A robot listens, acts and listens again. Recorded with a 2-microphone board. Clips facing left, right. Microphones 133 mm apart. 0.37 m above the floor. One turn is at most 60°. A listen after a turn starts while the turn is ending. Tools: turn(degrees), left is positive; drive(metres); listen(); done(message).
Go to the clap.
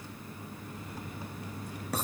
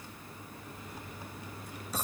listen()
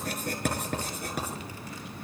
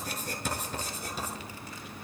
listen()
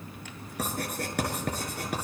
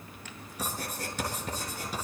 done("I can't make out a clap, only writing.")